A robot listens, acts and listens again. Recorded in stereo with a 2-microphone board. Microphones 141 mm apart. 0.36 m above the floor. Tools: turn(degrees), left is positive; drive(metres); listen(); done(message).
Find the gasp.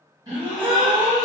turn(degrees=-30)
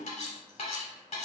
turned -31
listen()
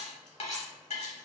done("I heard a gasp, but can't make it out now. It was about straight ahead or 115° right.")